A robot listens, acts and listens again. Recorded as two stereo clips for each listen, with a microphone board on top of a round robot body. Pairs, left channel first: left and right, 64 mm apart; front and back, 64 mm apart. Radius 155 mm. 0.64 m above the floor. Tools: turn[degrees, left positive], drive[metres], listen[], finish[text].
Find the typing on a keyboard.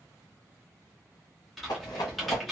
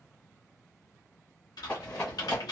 Action: finish[Facing the typing on a keyboard, 1 to 2 m away.]